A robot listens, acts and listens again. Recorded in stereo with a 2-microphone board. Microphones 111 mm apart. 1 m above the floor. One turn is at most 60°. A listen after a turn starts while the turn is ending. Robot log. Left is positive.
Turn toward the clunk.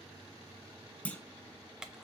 cmd yaw +30
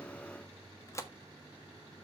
cmd idle
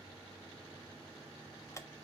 end: I heard a clunk, but can't make it out now. It was about 20° right or 140° left.